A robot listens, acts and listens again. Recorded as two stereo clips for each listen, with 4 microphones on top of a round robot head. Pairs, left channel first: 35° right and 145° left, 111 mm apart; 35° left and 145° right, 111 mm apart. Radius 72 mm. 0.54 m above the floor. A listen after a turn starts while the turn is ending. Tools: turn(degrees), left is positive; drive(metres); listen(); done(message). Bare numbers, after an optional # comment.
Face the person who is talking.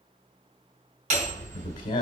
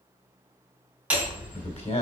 # The man speaking: 10° left.
turn(10)
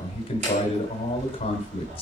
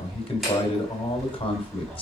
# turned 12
done("Found it: a man speaking, straight ahead, 2 to 4 m away.")